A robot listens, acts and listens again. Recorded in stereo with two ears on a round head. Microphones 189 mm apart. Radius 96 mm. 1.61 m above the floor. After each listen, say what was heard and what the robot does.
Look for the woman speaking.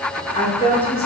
The woman speaking: about 25° left or 155° left. Turn 25° left.
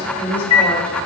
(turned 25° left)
Found it: a woman speaking, straight ahead.